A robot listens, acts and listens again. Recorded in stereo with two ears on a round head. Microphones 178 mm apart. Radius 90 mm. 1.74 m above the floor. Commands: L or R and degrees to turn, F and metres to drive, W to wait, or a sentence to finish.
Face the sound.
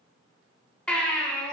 L30
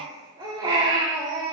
R25
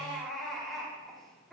Facing the baby crying, 2 to 4 m away.